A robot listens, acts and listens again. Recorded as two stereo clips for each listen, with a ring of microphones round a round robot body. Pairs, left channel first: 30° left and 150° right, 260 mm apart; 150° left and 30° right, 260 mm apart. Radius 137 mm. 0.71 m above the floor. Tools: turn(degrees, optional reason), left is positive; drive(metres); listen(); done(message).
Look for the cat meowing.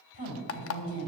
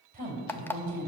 listen()
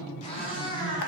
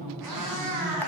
turn(degrees=-45, reason="The cat meowing: 45° right.")
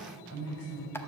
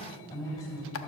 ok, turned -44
listen()
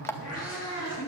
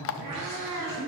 turn(degrees=-10, reason="The cat meowing is now 10° right.")
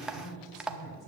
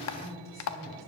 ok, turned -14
listen()
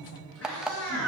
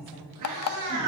done("Found it: a cat meowing, straight ahead, over 4 m away.")